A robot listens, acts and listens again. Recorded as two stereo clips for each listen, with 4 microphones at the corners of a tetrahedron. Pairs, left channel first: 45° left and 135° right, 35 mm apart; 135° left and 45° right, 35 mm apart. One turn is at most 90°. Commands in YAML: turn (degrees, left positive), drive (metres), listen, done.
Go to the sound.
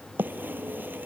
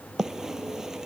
turn: -90
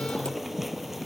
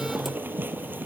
turn: -50
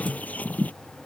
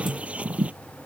drive: 1.0
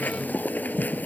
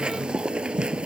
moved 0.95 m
turn: 15
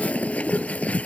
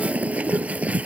drive: 1.0
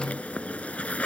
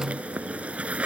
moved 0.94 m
drive: 1.0
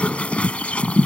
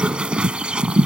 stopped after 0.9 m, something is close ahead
done: "I am next to the bird."